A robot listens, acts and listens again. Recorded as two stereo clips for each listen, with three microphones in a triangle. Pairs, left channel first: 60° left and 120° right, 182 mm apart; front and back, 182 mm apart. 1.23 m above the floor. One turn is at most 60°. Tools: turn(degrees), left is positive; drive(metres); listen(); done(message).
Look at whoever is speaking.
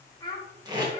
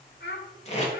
done("Facing the child speaking, 1 to 2 m away.")